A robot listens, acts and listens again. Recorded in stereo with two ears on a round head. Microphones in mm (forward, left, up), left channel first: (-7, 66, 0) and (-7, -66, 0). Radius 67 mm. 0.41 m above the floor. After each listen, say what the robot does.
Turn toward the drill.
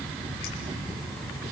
Keep listening.
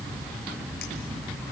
Keep listening.
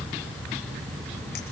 I can't make out a drill.